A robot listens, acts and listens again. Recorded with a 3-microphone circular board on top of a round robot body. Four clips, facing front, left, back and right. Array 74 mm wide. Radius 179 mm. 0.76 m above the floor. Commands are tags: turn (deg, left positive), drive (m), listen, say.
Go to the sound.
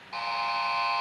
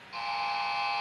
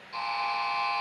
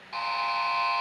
<turn deg="-55"/>
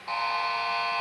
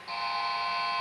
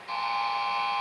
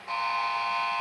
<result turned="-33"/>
<turn deg="-20"/>
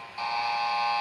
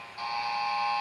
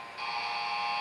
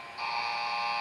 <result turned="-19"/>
<drive m="1.0"/>
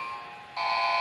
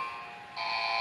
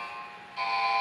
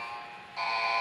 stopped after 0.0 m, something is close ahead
<turn deg="-10"/>
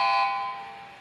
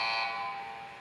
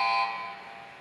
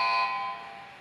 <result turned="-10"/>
<say>Something is in my way. I am facing the buzzer but have not reached it.</say>